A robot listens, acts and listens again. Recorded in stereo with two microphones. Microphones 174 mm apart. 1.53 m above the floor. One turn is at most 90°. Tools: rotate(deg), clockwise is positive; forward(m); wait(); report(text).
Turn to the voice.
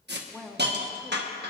rotate(-30)
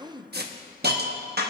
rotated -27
rotate(25)
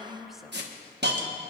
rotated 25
report("Facing the woman speaking, under 1 m away.")